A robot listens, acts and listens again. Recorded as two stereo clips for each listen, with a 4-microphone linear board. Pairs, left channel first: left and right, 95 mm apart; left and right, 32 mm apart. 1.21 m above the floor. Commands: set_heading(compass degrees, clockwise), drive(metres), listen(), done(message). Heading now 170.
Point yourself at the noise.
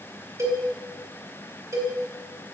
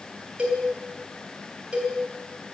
set_heading(205)
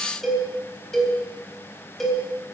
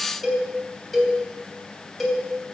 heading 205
done("Facing the cowbell, 2 to 4 m away.")